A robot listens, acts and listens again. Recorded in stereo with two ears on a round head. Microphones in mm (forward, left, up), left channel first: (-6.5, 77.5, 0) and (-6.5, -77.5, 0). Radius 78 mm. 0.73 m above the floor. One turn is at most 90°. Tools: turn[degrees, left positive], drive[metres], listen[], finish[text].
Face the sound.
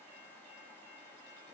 Action: listen[]
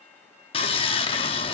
Thought: The sawing: about 30° left or 150° left.
Action: turn[30]
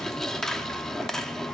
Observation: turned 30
Action: finish[Facing the sawing, under 1 m away.]